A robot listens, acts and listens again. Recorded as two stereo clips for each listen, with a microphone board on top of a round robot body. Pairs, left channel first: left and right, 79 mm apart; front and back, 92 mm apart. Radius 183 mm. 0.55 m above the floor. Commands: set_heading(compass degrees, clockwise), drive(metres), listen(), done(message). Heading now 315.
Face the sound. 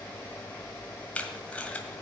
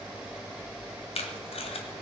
set_heading(300)
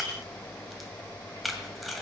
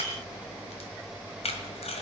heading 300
done("Found it: tape being pulled, straight ahead, 1 to 2 m away.")